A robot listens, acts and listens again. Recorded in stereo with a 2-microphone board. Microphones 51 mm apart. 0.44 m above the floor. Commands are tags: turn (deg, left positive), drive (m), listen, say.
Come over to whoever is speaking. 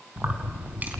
<listen/>
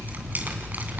<listen/>
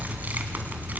<say>I can't make out anyone speaking, only keys jangling.</say>